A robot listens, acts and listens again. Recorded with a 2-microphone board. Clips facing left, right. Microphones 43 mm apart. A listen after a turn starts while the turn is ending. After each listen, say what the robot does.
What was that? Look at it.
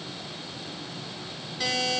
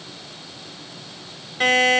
Turn 45° right.
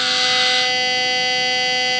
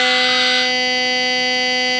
Facing the buzzer.